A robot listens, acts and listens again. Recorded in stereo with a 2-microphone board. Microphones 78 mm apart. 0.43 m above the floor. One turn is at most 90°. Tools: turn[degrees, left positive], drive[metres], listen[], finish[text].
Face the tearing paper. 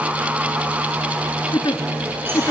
Action: listen[]
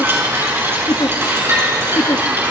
Action: listen[]
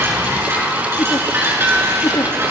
Action: finish[I can't make out tearing paper to turn to.]